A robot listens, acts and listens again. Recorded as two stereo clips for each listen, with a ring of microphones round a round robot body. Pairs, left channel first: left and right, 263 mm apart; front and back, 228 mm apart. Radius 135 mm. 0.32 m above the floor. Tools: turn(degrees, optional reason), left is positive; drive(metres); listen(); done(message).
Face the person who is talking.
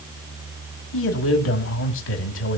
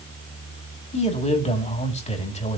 turn(degrees=55, reason="The man speaking: 55° left.")
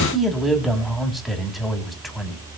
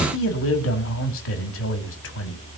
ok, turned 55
done("Found it: a man speaking, straight ahead, 2 to 4 m away.")